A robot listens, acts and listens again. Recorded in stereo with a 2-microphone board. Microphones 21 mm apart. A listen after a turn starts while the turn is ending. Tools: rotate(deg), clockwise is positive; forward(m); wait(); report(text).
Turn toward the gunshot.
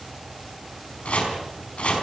wait()
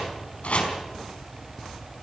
wait()
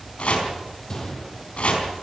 rotate(-30)
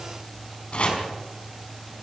wait()
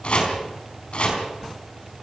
report("I heard a gunshot, but can't make it out now. It was about straight ahead or 120° left.")